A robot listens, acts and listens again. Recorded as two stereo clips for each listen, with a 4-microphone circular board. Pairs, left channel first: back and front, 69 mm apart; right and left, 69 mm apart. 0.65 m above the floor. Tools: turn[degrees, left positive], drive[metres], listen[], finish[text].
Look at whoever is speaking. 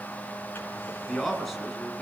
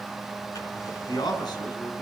Thought: The man speaking: 90° right.
Action: turn[-90]
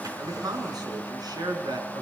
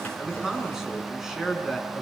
Action: finish[Facing the man speaking, over 4 m away.]